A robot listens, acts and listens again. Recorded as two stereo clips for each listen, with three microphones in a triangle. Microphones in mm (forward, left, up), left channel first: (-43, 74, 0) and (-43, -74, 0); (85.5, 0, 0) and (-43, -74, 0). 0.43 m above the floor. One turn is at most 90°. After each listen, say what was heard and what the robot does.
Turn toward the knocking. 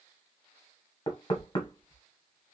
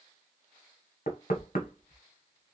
The knocking: 30° left. Turn 30° left.
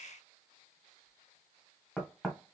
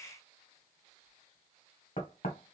Facing the knocking, 1 to 2 m away.